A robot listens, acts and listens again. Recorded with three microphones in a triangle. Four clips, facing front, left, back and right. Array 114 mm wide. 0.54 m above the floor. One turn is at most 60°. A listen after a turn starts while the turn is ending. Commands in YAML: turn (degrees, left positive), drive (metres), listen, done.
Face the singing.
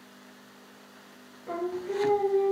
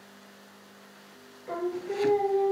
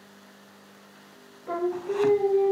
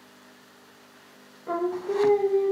turn: -60
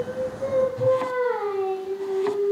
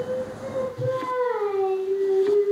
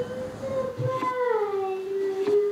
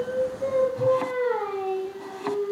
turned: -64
turn: -15
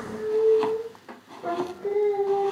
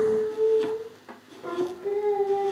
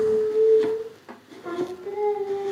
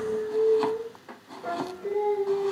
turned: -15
done: "Facing the singing, 2 to 4 m away."